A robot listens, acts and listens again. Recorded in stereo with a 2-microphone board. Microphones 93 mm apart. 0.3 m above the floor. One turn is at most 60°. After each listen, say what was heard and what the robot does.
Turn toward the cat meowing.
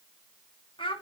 Keep listening.
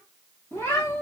The cat meowing: about 25° left or 155° left. Turn 25° left.
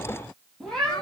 Found it: a cat meowing, straight ahead, 2 to 4 m away.